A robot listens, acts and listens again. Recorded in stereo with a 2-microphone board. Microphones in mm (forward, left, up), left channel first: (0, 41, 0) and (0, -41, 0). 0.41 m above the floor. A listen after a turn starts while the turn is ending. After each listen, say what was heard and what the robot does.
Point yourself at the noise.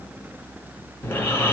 The snoring: about 25° left or 155° left. Turn 25° left.
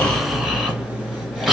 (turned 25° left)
Found it: snoring, straight ahead.